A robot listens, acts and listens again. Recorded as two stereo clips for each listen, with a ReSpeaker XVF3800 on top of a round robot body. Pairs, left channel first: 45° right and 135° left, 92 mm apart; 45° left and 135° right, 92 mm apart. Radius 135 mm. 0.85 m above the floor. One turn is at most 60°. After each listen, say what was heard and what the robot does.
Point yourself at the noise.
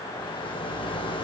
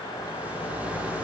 The rattle: 65° right. Turn 60° right.
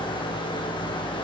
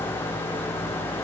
The rattle is now 15° right. Turn 15° right.
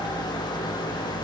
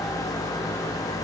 Facing the rattle, 2 to 4 m away.